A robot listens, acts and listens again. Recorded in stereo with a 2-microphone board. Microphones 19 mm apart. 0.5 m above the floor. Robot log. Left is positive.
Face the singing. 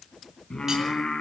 note: The singing: about 65° left or 115° left.
cmd yaw +65
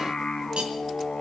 note: So it is at 50° left.
cmd yaw +50
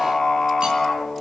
note: The singing is now 30° left.
cmd yaw +30
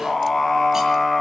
end: Facing the singing.